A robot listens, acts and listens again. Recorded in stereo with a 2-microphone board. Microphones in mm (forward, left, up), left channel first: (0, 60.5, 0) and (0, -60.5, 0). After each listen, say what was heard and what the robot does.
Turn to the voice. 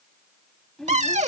Turn 30° left.
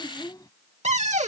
So it is at 145° left. Turn 145° left.
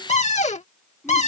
Keep listening.
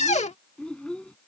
The child speaking is now 10° left. Turn 10° left.
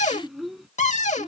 Facing the child speaking.